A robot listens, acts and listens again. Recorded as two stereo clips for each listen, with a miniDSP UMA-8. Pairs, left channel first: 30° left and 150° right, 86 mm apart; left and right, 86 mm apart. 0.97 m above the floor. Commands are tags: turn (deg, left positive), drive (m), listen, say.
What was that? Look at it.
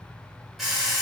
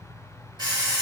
<turn deg="-60"/>
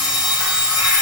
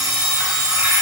<turn deg="-10"/>
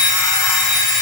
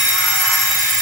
<say>Found it: an alarm clock, straight ahead.</say>